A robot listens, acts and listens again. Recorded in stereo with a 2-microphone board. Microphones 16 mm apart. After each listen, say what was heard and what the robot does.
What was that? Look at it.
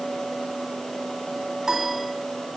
The piano: about 35° right or 145° right. Turn 35° right.
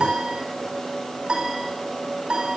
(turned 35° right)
So it is at 110° right. Turn 110° right.
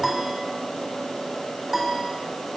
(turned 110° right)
Found it: a piano, straight ahead, over 4 m away.